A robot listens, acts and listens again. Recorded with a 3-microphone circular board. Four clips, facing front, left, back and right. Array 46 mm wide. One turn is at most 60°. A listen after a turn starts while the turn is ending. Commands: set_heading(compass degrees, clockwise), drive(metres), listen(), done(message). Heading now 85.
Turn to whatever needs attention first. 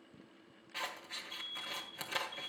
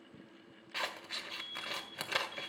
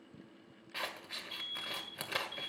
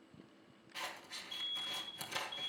set_heading(25)
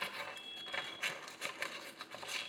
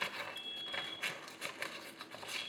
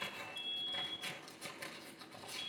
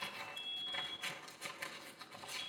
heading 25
set_heading(325)
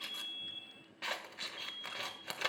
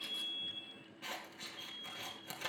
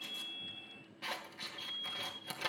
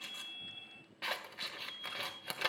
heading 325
done("Found it: an alarm, straight ahead, 2 to 4 m away.")